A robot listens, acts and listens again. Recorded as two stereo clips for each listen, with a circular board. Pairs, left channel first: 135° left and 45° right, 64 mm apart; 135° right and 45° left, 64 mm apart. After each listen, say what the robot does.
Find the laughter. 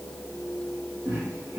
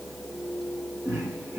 Turn 10° right.
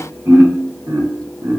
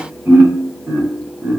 Turn 20° right.
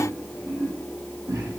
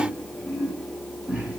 Turn 25° right.
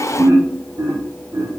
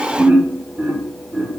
Turn 30° right.
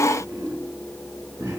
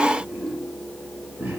Turn 15° right.
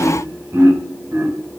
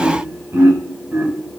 Found it: laughter, straight ahead, 1 to 2 m away.